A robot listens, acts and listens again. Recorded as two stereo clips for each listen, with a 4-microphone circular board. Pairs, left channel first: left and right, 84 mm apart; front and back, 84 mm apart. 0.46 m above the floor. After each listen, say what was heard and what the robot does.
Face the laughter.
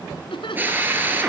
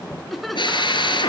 The laughter: 90° left. Turn 90° left.
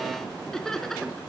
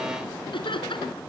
Facing the laughter.